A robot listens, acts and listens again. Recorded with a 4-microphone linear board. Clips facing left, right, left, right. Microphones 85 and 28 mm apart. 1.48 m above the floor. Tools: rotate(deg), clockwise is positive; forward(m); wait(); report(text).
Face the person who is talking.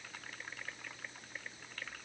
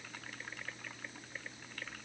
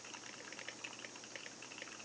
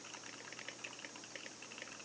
wait()
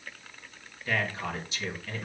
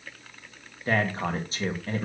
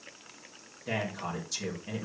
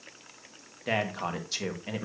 rotate(35)
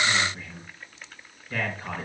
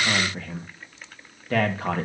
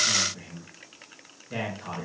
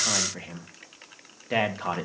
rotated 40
rotate(105)
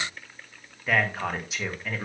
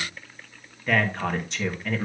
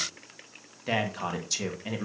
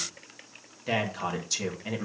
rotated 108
report("Found it: a man speaking, straight ahead, 1 to 2 m away.")